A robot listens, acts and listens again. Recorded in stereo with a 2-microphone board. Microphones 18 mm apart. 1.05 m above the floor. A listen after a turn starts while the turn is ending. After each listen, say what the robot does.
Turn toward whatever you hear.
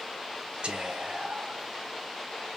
Turn 65° right.
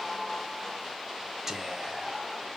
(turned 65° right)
Turn 20° right.
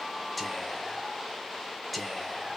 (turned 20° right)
Found it: whispering, straight ahead, under 1 m away.